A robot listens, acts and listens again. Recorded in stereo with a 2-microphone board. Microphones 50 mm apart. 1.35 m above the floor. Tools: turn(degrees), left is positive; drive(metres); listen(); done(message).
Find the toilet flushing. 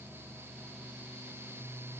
listen()
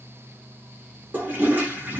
turn(degrees=-40)
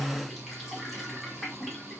done("Facing the toilet flushing, under 1 m away.")